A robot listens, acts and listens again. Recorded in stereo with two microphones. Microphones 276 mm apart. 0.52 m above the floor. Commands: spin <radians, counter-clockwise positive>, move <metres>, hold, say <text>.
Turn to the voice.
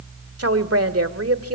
spin -0.96
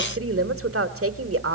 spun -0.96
spin -1.05
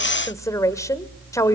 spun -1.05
spin 0.26
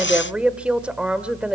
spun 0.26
say Facing the woman speaking, 1 to 2 m away.